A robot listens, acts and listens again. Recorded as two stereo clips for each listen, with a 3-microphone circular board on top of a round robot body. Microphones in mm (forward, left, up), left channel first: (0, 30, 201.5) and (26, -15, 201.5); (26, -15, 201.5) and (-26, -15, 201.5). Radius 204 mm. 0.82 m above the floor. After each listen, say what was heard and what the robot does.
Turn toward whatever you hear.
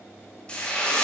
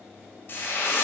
The frying: 50° left. Turn 50° left.
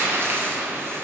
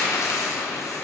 The frying is now 15° right. Turn 15° right.
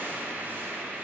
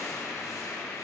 Facing the frying, 1 to 2 m away.